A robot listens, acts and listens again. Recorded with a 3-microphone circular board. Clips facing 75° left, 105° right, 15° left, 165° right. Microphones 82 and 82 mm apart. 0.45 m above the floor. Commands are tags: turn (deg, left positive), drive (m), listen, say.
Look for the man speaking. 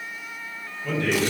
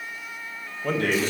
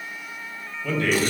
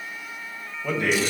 <turn deg="-90"/>
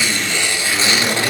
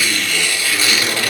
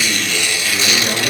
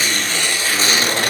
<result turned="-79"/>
<turn deg="-10"/>
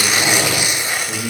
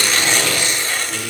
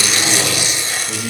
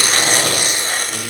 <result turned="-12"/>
<turn deg="45"/>
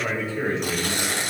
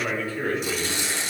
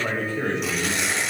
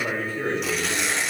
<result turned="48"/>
<turn deg="15"/>
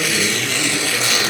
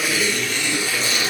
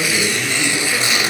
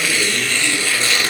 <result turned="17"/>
<listen/>
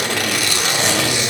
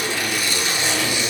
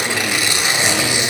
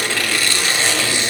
<listen/>
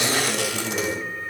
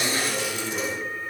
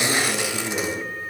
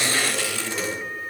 <say>Facing the man speaking.</say>